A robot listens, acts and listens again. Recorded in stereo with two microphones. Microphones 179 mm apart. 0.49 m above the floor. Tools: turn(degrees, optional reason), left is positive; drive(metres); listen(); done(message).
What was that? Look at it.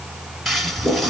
turn(degrees=30)
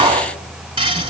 turn(degrees=-30, reason="So it is at 30° right.")
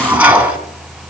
turn(degrees=-10, reason="The toilet flushing is now 10° right.")
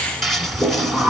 done("Facing the toilet flushing, 1 to 2 m away.")